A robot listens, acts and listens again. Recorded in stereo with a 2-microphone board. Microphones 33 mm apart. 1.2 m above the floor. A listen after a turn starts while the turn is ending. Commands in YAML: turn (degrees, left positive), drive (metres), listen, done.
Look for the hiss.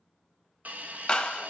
turn: -55
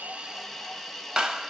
done: "Found it: a hiss, straight ahead."